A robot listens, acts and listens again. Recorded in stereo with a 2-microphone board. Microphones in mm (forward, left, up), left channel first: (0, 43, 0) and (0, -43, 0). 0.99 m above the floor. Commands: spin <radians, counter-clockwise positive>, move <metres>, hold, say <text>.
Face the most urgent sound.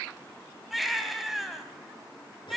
spin 0.52
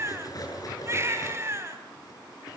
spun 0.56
spin -0.61
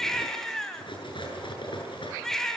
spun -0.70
say Found it: a baby crying, straight ahead.